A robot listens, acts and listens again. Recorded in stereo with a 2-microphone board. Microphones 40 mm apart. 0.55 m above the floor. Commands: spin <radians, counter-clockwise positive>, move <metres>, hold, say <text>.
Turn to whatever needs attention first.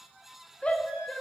spin 0.52
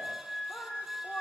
spin 2.01
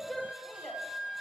spin 0.17
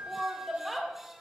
say Found it: a shout, straight ahead, 1 to 2 m away.